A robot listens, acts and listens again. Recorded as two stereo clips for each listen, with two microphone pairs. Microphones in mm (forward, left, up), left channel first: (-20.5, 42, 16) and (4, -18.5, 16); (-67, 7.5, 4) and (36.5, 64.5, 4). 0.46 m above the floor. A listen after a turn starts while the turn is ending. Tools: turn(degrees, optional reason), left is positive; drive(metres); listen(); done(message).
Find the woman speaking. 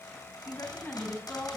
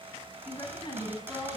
turn(degrees=160, reason="The woman speaking: 160° left.")
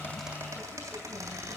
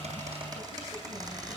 listen()
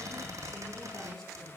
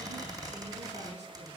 listen()
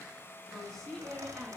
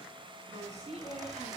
turn(degrees=30, reason="The woman speaking is now 30° left.")
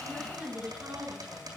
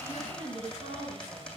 turn(degrees=-10, reason="The woman speaking is now 10° right.")
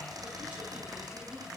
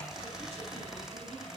listen()
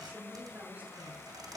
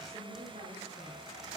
done("Facing the woman speaking, over 4 m away.")